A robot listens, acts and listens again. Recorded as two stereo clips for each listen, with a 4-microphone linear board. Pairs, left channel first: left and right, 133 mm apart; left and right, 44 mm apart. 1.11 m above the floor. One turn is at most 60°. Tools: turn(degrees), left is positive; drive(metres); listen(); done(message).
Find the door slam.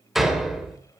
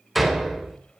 turn(degrees=30)
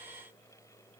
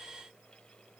listen()
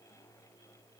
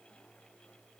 done("I heard a door slam, but can't make it out now. It was about 30° right or 150° left.")